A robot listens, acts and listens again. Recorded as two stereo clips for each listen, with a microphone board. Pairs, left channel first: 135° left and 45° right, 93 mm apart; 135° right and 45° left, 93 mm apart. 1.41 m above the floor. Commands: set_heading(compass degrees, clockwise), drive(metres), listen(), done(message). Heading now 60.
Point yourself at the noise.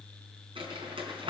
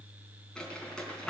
set_heading(115)
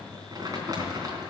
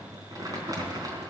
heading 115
done("Facing the crumpling.")